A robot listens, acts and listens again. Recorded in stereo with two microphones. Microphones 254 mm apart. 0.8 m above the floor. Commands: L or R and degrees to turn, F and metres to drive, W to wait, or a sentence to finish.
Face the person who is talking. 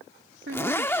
R50
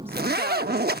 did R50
W
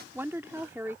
R10
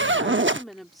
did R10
Facing the woman speaking.